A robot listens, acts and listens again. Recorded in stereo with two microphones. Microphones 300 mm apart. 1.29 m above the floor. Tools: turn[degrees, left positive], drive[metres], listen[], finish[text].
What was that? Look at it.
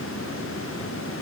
Action: listen[]
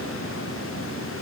Action: listen[]
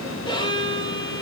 Action: turn[30]
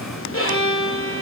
Thought: So it is at 130° left.
Action: turn[130]
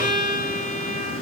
Thought: The violin is now 30° left.
Action: turn[30]
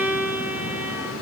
Action: finish[Found it: a violin, straight ahead.]